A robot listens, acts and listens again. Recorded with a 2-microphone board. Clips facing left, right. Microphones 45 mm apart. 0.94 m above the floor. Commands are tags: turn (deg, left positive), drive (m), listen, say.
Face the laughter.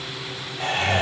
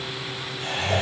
<turn deg="70"/>
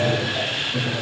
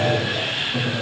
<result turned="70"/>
<turn deg="-10"/>
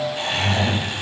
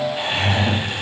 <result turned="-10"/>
<turn deg="-20"/>
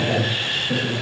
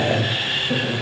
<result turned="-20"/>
<turn deg="-15"/>
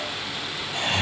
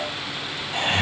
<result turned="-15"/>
<turn deg="-30"/>
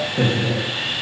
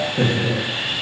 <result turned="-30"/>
<say>Found it: laughter, straight ahead.</say>